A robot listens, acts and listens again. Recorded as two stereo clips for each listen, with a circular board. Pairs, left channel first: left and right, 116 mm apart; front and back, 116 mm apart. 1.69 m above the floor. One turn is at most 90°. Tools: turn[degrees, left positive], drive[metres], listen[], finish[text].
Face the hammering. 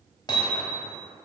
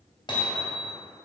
Thought: The hammering: 40° left.
Action: turn[40]
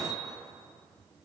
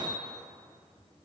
Action: finish[Found it: hammering, straight ahead, 2 to 4 m away.]